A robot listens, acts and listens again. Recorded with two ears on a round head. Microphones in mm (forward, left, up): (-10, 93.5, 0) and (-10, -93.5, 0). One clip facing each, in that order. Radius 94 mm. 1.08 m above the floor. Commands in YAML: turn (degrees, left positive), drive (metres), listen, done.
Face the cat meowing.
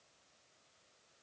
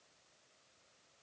listen: true
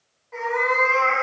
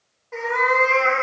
turn: -60
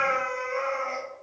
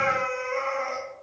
turn: -35
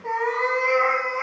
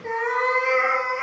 turn: -35
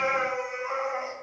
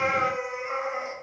turn: -15
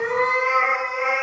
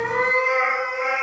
done: "Found it: a cat meowing, straight ahead, 1 to 2 m away."